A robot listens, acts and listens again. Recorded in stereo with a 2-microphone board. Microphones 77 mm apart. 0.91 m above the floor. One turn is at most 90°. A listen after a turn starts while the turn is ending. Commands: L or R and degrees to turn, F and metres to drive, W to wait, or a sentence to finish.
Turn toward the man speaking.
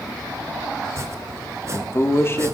L30
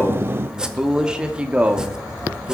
R20
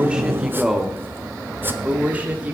R20
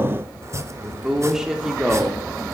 Facing the man speaking.